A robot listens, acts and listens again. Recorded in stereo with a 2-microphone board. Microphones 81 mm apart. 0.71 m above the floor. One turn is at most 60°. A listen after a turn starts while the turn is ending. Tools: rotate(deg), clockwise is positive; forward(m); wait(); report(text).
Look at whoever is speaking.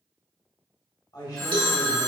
rotate(-50)
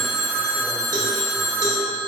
wait()
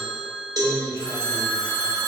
wait()
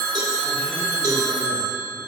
report("I heard a man speaking, but can't make it out now. It was about straight ahead or 80° left.")